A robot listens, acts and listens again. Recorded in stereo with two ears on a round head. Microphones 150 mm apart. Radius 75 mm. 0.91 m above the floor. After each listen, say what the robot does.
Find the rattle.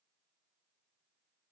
Keep listening.
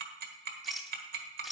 Turn 30° left.
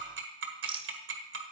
Turn 35° right.
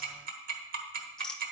Found it: a rattle, straight ahead, under 1 m away.